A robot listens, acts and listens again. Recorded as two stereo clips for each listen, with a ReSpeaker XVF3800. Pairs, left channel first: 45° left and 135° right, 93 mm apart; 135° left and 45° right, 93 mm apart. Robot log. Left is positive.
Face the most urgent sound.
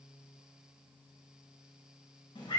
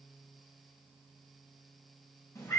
cmd idle
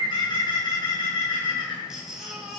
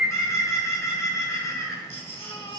note: The baby crying: 140° left.
cmd yaw +140
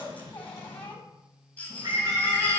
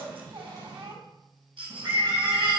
note: The baby crying is now 30° right.
cmd yaw -30
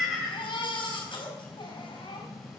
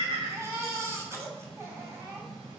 note: The baby crying is now 15° left.
cmd yaw +15
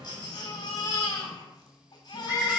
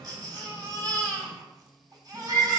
end: Facing the baby crying, 2 to 4 m away.